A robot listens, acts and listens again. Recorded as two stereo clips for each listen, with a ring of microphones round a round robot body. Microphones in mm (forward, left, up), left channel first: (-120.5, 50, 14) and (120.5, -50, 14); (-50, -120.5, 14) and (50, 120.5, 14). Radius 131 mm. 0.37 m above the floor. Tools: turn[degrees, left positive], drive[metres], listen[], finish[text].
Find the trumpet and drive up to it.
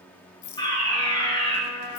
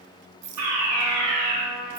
Thought: The trumpet: 165° right.
Action: turn[-165]
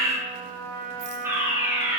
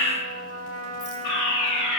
Action: drive[1.0]
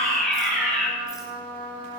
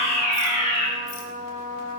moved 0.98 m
Action: drive[1.0]
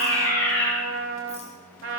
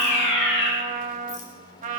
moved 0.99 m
Thought: The trumpet is now 10° left.
Action: turn[10]
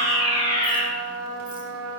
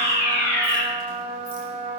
Action: drive[1.0]
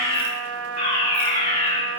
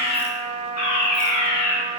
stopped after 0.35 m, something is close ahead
Action: finish[Arrived at the trumpet, straight ahead.]